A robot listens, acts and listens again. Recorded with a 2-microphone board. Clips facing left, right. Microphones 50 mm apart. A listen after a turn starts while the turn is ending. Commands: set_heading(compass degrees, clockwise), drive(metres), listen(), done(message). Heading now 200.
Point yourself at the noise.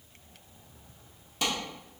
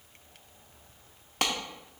set_heading(260)
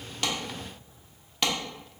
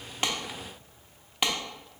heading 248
set_heading(263)
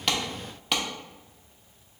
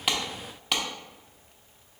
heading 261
done("Found it: a clap, straight ahead, under 1 m away.")